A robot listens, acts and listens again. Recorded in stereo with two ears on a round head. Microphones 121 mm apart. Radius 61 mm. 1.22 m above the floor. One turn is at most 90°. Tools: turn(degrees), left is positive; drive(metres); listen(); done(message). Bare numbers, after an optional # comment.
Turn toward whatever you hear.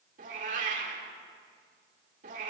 # The cat meowing: about 65° right or 115° right.
turn(-65)
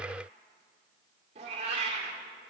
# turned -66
# So it is at 50° right.
turn(-50)
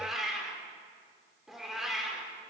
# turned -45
done("Found it: a cat meowing, straight ahead.")